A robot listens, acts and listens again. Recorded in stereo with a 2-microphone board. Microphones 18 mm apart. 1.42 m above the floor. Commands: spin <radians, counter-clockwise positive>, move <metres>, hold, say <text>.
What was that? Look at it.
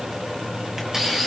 spin -0.35
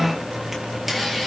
say Facing the camera shutter, over 4 m away.